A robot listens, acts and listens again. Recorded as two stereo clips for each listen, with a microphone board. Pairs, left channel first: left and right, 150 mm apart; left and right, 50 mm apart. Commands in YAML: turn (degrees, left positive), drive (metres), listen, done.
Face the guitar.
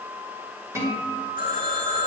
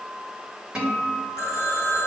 turn: -20
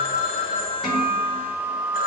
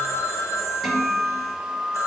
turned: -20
done: "Facing the guitar."